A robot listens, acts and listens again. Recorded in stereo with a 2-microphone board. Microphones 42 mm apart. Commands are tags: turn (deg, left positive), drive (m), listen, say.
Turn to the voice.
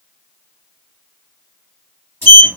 <listen/>
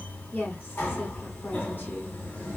<turn deg="50"/>
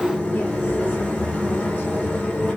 <listen/>
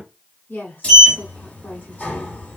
<turn deg="60"/>
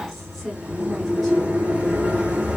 <say>Facing the woman speaking, 1 to 2 m away.</say>